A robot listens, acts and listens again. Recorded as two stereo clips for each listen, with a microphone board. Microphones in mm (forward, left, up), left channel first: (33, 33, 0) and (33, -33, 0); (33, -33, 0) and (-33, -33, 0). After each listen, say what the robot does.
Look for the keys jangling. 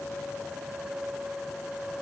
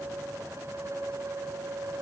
Keep listening.
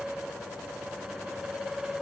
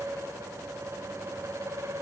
Keep listening.
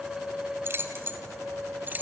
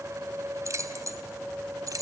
Turn 150° right.
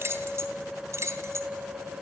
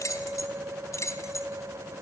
Turn 40° right.
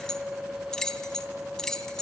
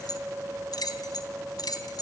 Turn 10° left.
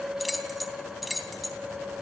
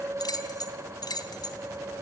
Found it: keys jangling, straight ahead.